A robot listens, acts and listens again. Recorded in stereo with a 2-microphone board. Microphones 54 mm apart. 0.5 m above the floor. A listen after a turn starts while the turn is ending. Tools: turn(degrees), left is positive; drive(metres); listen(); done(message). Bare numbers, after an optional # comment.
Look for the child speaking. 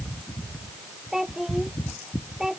turn(-30)
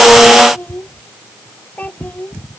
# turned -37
# So it is at 30° left.
turn(30)
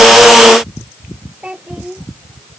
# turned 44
# The child speaking is now 20° right.
turn(-20)
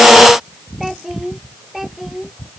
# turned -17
done("Facing the child speaking.")